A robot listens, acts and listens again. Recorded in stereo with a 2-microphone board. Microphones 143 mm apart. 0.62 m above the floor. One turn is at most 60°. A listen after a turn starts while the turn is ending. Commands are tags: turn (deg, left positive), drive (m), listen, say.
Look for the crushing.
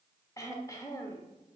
<listen/>
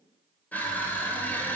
<turn deg="30"/>
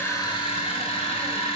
<turn deg="60"/>
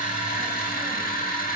<turn deg="60"/>
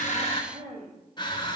<turn deg="30"/>
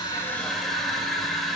<say>Found it: crushing, straight ahead, 1 to 2 m away.</say>